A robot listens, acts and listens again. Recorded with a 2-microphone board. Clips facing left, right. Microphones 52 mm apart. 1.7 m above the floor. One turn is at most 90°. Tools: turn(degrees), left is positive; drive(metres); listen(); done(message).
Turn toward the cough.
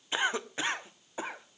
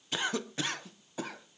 turn(degrees=25)
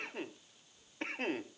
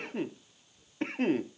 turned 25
done("Found it: a cough, straight ahead.")